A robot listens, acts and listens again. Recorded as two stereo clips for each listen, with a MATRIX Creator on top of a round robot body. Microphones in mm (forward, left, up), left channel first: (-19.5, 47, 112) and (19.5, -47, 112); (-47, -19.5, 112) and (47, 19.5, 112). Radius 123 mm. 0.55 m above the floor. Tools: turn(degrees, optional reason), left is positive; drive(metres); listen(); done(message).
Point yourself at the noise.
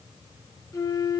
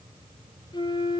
turn(degrees=165, reason="The flute: 165° left.")
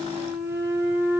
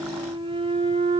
done("Facing the flute.")